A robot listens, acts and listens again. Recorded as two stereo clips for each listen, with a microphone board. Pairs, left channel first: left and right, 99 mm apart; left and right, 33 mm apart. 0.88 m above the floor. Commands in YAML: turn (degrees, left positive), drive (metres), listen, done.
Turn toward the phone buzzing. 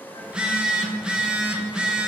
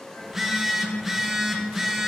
turn: -30
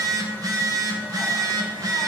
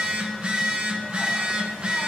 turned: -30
turn: -145
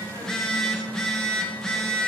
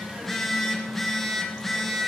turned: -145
done: "Found it: a phone buzzing, straight ahead, under 1 m away."